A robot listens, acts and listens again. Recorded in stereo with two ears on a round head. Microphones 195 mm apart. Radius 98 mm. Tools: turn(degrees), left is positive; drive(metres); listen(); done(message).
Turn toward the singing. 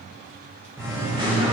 turn(degrees=-25)
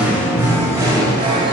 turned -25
turn(degrees=-25)
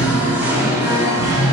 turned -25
turn(degrees=-20)
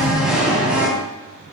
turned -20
done("Facing the singing.")